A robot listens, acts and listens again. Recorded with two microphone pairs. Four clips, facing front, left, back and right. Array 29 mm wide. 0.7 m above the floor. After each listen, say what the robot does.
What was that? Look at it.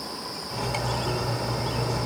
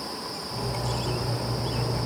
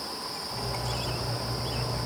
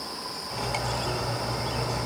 Turn 60° right.
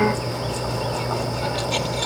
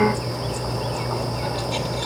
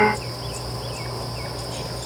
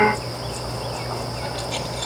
Turn 15° right.
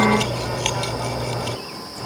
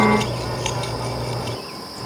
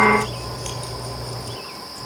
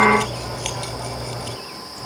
Facing the cutlery clinking.